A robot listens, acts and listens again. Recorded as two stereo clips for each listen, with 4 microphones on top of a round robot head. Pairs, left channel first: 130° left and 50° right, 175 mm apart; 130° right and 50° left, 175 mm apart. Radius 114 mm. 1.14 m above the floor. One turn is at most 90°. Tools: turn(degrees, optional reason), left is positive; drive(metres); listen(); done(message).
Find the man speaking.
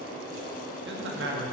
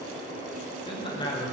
turn(degrees=-60, reason="The man speaking: 60° right.")
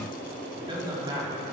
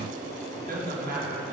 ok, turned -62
turn(degrees=15, reason="The man speaking is now 15° left.")
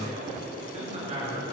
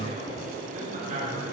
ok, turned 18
done("Found it: a man speaking, straight ahead, over 4 m away.")